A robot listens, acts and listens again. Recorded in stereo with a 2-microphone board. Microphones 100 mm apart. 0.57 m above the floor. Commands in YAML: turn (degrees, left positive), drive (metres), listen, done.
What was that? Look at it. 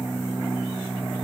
listen: true
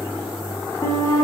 turn: 35
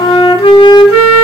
turn: 105
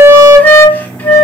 turn: 15
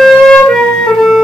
done: "Found it: a flute, straight ahead, under 1 m away."